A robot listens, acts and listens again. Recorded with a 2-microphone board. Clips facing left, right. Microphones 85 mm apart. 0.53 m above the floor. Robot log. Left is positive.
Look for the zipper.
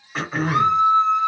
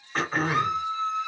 cmd idle
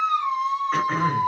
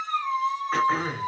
cmd idle
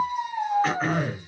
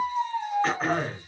end: I can't make out a zipper to turn to.